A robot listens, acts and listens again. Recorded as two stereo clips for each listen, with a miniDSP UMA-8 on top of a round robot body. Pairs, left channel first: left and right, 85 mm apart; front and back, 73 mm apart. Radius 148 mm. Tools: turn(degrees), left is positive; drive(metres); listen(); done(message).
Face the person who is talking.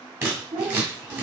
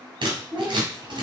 turn(degrees=-125)
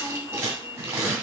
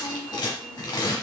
listen()
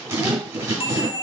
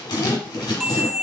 listen()
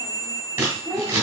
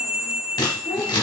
done("Facing the child speaking, 2 to 4 m away.")